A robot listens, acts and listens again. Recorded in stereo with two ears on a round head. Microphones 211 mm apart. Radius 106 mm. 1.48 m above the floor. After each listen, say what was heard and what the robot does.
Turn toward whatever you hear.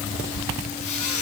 The squeak: about 30° left or 150° left. Turn 30° left.
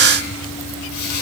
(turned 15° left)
So it is at 135° left. Turn 135° left.
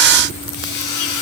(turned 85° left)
The squeak is now 50° left. Turn 50° left.
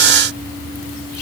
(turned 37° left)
Nothing new. It was at 15° left. Turn 15° left.
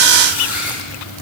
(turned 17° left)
Found it: a squeak, straight ahead, over 4 m away.